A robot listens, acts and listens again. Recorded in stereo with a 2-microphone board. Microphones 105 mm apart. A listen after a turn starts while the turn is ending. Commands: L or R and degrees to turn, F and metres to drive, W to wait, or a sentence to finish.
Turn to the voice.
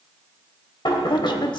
L50
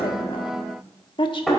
L70
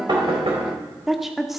Found it: a woman speaking, straight ahead.